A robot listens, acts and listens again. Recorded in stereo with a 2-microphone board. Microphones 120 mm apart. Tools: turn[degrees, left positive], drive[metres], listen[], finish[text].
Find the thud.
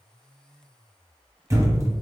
Thought: The thud: about 25° right or 155° right.
Action: turn[-25]
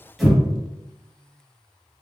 Action: finish[Facing the thud.]